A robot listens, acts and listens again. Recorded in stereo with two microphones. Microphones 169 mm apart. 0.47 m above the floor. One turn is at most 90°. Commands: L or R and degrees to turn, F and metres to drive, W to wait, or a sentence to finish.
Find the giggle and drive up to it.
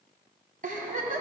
R55
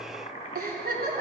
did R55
R70
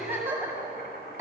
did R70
R10
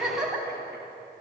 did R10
F1.0
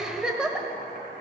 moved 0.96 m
F1.0
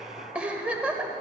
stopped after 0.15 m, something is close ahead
Arrived at the giggle, straight ahead.